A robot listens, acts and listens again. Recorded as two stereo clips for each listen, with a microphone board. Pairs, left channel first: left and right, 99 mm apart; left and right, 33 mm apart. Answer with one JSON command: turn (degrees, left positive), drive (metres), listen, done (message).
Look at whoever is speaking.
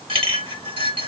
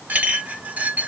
{"listen": true}
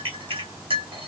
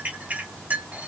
{"listen": true}
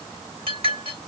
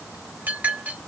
{"done": "I can't make out anyone speaking to turn to."}